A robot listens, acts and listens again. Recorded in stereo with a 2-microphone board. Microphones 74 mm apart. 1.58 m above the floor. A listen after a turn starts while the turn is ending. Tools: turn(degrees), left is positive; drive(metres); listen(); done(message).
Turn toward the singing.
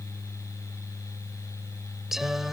turn(degrees=-30)
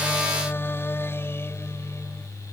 turn(degrees=35)
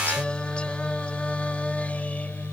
turn(degrees=20)
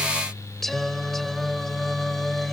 done("Found it: singing, straight ahead.")